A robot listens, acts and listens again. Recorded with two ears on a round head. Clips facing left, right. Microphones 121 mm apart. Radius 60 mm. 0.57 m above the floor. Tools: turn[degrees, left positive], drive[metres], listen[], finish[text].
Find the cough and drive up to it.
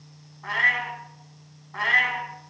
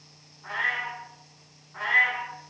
Action: listen[]
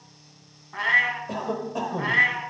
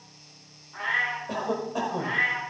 Action: turn[30]
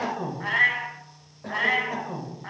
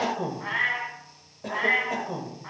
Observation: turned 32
Thought: So it is at 30° right.
Action: turn[-30]
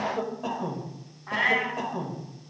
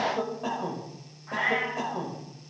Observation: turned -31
Action: drive[1.0]
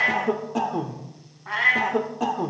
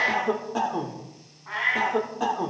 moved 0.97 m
Action: drive[1.0]
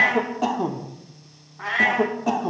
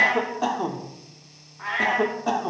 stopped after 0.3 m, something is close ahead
Thought: The cough is now 10° left.
Action: turn[10]
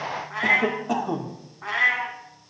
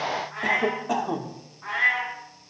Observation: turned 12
Action: finish[I am next to the cough.]